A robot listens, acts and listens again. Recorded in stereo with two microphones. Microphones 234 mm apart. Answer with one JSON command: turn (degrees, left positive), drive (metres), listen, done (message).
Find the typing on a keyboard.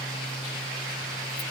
{"listen": true}
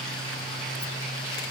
{"listen": true}
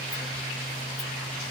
{"done": "I can't make out typing on a keyboard to turn to."}